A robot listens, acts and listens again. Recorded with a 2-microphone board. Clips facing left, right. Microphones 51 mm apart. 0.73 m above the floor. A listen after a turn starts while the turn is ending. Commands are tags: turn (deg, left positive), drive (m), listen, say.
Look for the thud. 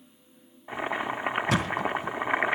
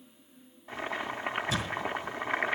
<turn deg="60"/>
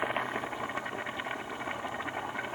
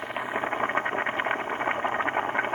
<listen/>
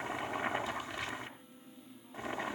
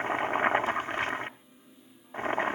<say>I heard a thud, but can't make it out now. It was about straight ahead or 60° left.</say>